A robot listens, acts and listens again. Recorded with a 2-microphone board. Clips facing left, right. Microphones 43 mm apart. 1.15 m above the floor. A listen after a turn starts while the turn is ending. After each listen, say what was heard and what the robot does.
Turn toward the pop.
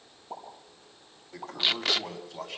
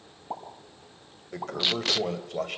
The pop: about 55° right or 125° right. Turn 55° right.
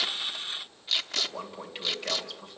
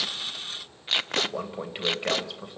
Keep listening.
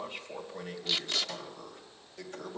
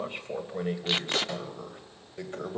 I heard a pop, but can't make it out now. It was about straight ahead or 70° right.